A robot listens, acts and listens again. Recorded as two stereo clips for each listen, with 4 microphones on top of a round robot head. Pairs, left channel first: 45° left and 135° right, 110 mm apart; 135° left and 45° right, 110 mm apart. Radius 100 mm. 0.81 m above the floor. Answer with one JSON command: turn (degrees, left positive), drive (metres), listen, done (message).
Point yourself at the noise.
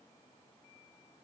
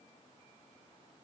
{"listen": true}
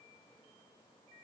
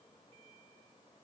{"listen": true}
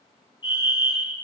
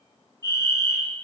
{"turn": 80}
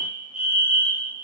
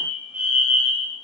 {"turn": 30}
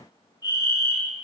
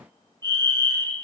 {"done": "Found it: a fire alarm, straight ahead, 2 to 4 m away."}